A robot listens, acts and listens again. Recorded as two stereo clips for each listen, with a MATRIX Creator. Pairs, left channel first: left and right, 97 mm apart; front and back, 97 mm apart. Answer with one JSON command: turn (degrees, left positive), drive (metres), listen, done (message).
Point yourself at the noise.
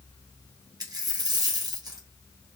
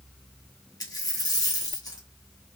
{"turn": -45}
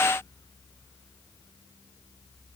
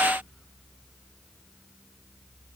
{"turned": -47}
{"done": "I heard a dropped coin from this way, but can't make it out now."}